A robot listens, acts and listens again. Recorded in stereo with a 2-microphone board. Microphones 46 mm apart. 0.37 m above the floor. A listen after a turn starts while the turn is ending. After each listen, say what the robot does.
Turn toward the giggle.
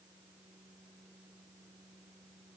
Keep listening.
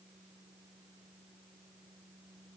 Keep listening.
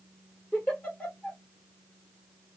Turn 25° left.
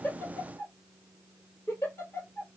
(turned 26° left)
Turn 130° left.
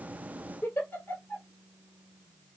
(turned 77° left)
Turn 50° left.
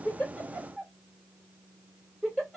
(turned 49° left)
Facing the giggle, 1 to 2 m away.